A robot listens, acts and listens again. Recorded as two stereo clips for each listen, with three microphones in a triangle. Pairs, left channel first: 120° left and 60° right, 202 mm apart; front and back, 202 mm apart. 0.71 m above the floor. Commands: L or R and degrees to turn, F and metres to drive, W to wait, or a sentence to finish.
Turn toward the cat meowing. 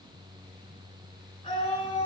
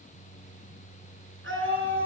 W
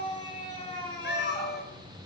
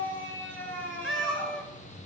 L85
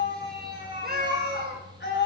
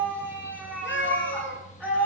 R25
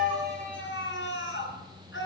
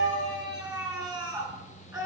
W
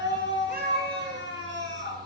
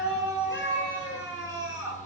R20
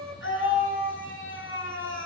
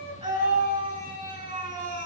Facing the cat meowing, 2 to 4 m away.